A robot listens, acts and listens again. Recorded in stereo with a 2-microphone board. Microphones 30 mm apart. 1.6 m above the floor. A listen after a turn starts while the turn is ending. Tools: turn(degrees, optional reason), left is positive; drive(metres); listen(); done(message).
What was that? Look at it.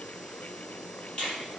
turn(degrees=30, reason="The finger snap: about 30° left or 150° left.")
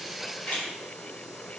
turn(degrees=120, reason="So it is at 120° left.")
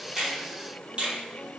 turn(degrees=-35, reason="The finger snap is now 35° right.")
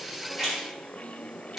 done("Found it: a finger snap, straight ahead.")